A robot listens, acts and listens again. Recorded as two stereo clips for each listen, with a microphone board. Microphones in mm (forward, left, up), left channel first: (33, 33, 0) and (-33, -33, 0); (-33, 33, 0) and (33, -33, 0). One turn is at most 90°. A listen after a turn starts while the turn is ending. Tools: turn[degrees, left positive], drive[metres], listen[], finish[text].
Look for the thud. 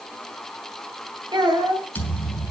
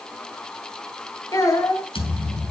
Thought: The thud: 120° left.
Action: turn[90]
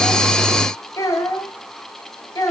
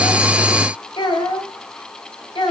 Thought: Nothing new. It was at 30° left.
Action: turn[30]
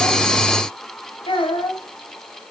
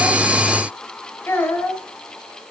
Action: finish[Facing where the thud came from. I can't hear it now.]